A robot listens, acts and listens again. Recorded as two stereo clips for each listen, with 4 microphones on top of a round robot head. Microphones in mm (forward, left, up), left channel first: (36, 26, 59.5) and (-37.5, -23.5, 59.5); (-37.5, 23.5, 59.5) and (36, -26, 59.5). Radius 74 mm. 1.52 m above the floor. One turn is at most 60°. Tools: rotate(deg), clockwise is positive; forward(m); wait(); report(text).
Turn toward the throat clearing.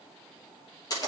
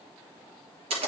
wait()
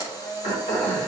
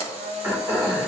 rotate(-35)
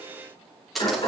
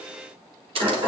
report("Facing the throat clearing, 2 to 4 m away.")